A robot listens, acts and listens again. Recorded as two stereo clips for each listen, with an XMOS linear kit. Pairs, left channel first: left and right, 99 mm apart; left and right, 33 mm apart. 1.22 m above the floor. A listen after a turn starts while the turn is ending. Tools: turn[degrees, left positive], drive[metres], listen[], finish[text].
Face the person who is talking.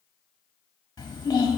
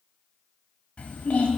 Thought: The child speaking: about 40° left or 140° left.
Action: turn[40]
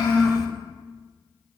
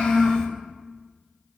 Action: finish[Facing the child speaking.]